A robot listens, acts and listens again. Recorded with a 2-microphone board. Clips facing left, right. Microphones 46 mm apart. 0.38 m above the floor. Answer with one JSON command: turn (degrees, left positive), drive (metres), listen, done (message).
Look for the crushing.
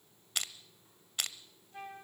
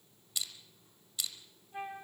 {"turn": 60}
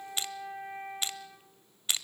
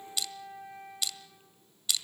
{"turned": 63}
{"turn": 40}
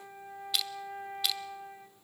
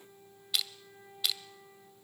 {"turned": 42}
{"done": "Facing the crushing."}